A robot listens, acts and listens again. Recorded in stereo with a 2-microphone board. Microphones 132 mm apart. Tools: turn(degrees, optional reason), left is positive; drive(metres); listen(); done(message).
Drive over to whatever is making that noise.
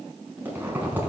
turn(degrees=-30)
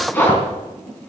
turn(degrees=15, reason="So it is at 15° left.")
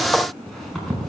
drive(metres=1.0)
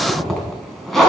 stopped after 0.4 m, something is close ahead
done("Something is in my way. I am facing the zipper but have not reached it.")